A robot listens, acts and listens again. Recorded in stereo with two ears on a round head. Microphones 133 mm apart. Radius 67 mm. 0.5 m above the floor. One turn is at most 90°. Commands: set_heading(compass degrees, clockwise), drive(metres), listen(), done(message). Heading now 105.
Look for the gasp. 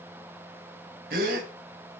set_heading(170)
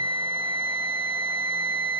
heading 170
listen()
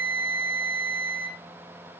done("I heard a gasp, but can't make it out now. It was about straight ahead or 50° right.")